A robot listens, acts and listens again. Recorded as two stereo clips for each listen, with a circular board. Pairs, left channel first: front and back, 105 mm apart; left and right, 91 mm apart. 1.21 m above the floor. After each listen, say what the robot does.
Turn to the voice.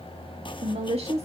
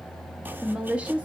Turn 165° right.
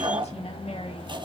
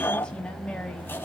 Keep listening.
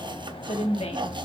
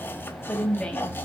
Turn 10° left.
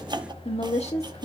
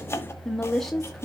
Found it: a woman speaking, straight ahead, 2 to 4 m away.